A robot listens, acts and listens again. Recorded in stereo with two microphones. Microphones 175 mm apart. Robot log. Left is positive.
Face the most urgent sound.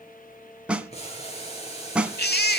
cmd yaw +90
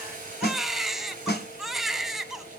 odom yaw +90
end: Facing the baby crying.